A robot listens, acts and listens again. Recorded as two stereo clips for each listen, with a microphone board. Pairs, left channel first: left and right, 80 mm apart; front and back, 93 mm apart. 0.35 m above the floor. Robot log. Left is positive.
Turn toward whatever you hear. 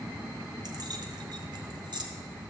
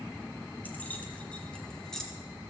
note: The keys jangling: 85° right.
cmd yaw -85
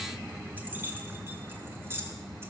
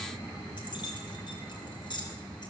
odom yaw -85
note: The keys jangling is now 30° right.
cmd yaw -30
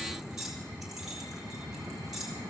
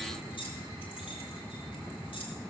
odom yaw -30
end: Facing the keys jangling, 2 to 4 m away.